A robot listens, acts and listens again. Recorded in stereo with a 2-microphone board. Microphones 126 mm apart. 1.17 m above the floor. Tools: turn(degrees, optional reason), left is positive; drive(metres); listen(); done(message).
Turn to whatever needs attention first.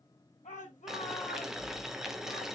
turn(degrees=90)
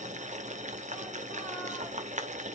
listen()
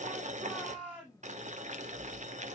turn(degrees=10, reason="The shout is now 10° left.")
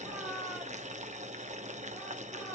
done("Found it: a shout, straight ahead, over 4 m away.")